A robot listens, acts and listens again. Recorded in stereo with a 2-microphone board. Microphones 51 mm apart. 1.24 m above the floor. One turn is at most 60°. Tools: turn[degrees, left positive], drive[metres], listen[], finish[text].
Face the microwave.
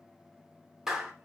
Action: listen[]
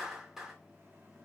Action: listen[]
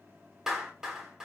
Action: finish[I can't make out a microwave to turn to.]